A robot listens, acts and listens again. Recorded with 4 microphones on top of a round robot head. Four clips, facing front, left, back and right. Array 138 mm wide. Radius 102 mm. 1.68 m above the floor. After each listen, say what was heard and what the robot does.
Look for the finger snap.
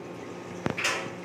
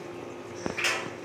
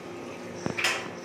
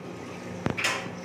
The finger snap: 125° left. Turn 125° left.
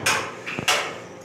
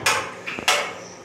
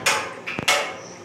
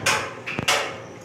The finger snap is now 30° left. Turn 30° left.
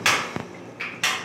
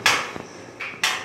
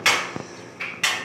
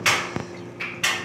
The finger snap is now 10° left. Turn 10° left.
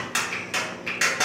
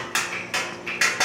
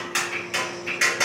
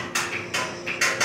Found it: a finger snap, straight ahead.